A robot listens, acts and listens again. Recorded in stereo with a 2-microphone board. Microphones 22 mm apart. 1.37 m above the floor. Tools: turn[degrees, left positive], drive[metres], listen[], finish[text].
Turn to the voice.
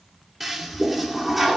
Action: listen[]
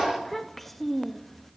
Action: turn[30]
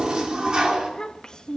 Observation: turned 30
Thought: So it is at 145° left.
Action: turn[145]
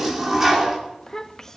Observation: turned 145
Thought: The child speaking is now 25° left.
Action: turn[25]
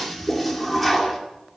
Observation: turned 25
Action: listen[]
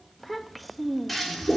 Action: finish[Found it: a child speaking, straight ahead.]